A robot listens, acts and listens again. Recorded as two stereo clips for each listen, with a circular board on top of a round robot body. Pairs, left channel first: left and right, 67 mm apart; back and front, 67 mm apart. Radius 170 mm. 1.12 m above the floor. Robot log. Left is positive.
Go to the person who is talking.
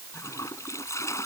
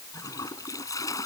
cmd idle
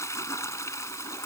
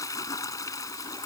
cmd idle
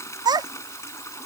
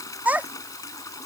note: The child speaking: 70° right.
cmd yaw -70
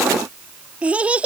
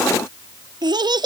note: The child speaking is now 20° right.
cmd yaw -20
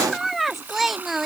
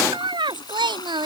cmd fwd 1.0
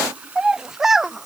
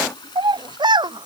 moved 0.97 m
cmd fwd 1.0
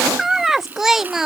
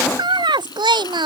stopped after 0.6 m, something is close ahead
end: I am next to the child speaking.